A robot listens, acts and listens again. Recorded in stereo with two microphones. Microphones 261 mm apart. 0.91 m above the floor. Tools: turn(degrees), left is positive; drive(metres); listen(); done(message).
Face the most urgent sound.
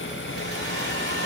listen()
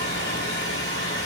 listen()
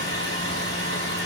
done("I can't make out anything urgent to turn to.")